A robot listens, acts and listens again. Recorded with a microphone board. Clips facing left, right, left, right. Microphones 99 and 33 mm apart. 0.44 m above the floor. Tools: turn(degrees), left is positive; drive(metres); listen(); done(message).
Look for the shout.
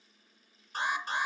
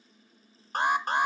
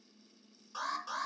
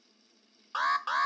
listen()
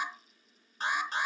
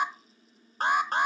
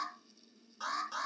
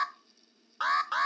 listen()
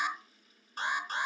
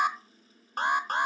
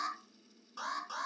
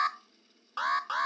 done("I can't make out a shout to turn to.")